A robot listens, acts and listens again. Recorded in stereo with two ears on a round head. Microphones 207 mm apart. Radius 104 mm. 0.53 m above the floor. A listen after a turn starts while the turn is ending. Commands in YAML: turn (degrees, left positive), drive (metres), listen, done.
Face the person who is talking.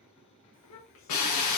turn: 60
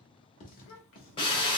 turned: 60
turn: 60
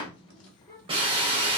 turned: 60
turn: 15
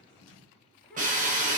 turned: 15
done: "Facing the child speaking, under 1 m away."